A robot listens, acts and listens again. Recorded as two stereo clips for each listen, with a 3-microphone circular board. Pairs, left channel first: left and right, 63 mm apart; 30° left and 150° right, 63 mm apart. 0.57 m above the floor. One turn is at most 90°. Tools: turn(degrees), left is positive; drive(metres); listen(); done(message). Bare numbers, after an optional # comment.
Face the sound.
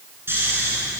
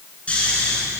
# The snoring: 40° right.
turn(-40)
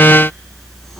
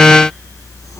listen()
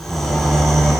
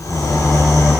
done("Found it: snoring, straight ahead.")